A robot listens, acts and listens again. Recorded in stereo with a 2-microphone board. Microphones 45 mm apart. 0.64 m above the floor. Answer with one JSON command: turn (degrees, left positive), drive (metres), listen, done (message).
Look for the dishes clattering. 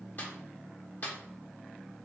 {"listen": true}
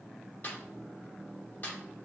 {"listen": true}
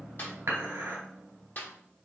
{"turn": -90}
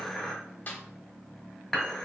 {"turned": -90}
{"done": "Found it: dishes clattering, straight ahead, 1 to 2 m away."}